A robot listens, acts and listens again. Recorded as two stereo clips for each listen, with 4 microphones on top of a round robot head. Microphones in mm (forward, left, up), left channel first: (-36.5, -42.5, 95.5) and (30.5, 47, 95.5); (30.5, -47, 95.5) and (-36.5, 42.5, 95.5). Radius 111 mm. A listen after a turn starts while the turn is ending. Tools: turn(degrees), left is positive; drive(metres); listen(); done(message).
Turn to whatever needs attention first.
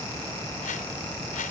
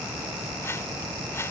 listen()
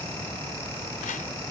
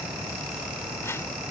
listen()
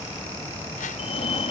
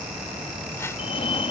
turn(degrees=-90)
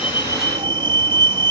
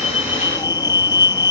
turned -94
done("Found it: a fire alarm, straight ahead.")